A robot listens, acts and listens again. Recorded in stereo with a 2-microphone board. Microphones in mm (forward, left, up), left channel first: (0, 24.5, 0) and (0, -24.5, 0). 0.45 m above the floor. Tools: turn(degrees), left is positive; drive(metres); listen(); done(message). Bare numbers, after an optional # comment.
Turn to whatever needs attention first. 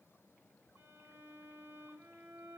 listen()
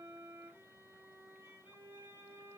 listen()
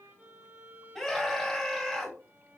turn(-30)
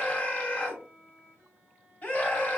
# So it is at 25° left.
turn(25)
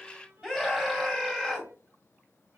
# The scream is now 15° right.
turn(-15)
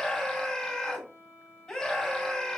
done("Found it: a scream, straight ahead.")